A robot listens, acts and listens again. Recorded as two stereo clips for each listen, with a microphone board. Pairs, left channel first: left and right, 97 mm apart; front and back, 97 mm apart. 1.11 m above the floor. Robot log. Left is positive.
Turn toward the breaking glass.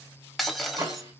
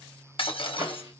end: Facing the breaking glass.